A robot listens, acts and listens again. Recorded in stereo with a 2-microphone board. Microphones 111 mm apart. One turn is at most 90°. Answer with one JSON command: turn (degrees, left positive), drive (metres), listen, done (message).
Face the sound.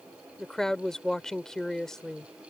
{"turn": 30}
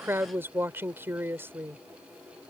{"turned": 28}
{"turn": -25}
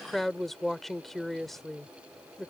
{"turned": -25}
{"done": "Found it: a woman speaking, straight ahead."}